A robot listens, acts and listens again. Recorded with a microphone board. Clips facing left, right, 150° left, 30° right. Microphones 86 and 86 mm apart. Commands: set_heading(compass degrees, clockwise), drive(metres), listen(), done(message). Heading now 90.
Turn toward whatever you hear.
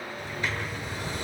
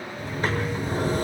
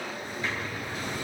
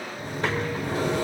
set_heading(135)
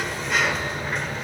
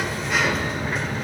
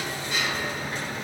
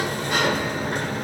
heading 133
done("Facing the sliding door, 1 to 2 m away.")